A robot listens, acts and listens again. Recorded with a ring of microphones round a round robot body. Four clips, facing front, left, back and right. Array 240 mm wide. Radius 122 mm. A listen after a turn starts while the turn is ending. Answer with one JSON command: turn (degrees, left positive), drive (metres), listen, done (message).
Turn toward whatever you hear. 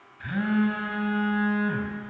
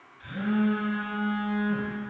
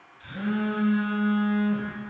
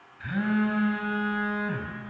{"turn": -50}
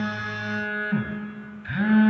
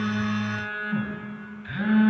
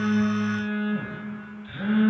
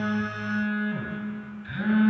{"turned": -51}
{"done": "Found it: a phone buzzing, straight ahead."}